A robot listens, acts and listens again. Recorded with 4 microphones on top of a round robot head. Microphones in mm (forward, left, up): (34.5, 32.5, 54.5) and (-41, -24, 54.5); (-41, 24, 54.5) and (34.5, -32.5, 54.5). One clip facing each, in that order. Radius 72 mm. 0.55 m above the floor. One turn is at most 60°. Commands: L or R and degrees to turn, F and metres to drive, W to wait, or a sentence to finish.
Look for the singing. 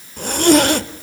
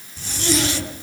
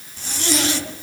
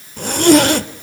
W
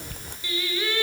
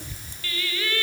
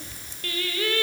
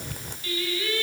L60
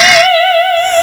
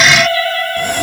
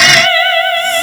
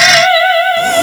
L40
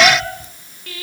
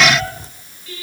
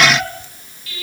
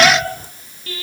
L15
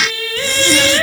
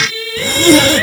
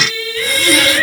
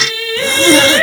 Found it: singing, straight ahead.